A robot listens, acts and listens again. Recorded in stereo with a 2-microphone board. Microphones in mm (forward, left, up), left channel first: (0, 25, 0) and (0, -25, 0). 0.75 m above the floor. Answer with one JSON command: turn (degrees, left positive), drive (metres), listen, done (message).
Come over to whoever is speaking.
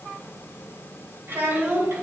{"turn": -55}
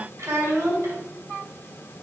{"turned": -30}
{"turn": -95}
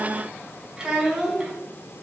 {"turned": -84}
{"turn": -15}
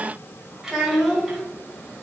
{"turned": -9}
{"drive": 1.0}
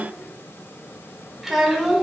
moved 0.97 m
{"drive": 1.0}
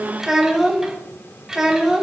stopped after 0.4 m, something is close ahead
{"turn": -10}
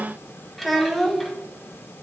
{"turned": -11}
{"done": "Arrived at the child speaking, straight ahead."}